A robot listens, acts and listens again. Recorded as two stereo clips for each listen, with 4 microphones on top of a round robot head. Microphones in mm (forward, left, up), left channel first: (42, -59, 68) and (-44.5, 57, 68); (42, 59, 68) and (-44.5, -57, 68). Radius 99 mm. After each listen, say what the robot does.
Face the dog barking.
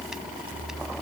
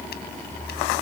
Keep listening.
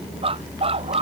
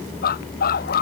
Turn 75° left.
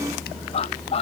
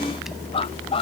Facing the dog barking.